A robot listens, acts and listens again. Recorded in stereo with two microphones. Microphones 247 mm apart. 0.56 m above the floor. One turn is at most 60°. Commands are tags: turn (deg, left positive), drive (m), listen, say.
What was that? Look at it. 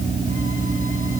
<listen/>
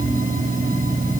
<listen/>
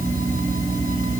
<say>I can't make out anything to turn to.</say>